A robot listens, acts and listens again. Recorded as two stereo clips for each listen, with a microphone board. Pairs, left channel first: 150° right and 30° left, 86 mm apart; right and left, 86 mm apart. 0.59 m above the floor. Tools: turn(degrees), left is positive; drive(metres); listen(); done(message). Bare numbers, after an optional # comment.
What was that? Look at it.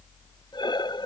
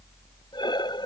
# The breathing: 120° right.
turn(-120)
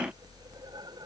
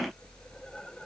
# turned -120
listen()
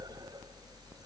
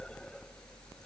listen()
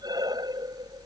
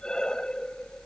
# The breathing is now 10° right.
turn(-10)
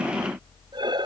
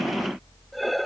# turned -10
done("Found it: breathing, straight ahead.")